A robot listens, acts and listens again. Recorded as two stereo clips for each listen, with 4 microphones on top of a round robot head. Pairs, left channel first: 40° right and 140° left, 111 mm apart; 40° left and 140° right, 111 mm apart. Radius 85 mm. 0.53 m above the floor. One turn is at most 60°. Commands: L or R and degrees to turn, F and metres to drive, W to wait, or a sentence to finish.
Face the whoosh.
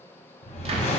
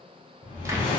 R10
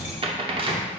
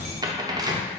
Found it: a whoosh, straight ahead, 1 to 2 m away.